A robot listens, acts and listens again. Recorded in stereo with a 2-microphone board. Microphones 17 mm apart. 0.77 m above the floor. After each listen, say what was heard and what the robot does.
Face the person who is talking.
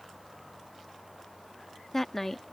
The woman speaking: about 15° left or 165° left. Turn 15° left.
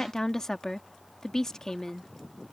So it is at 150° left. Turn 150° left.
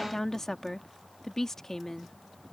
The woman speaking is now 30° left. Turn 30° left.
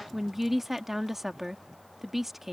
The woman speaking is now 20° right. Turn 20° right.
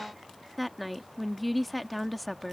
Facing the woman speaking.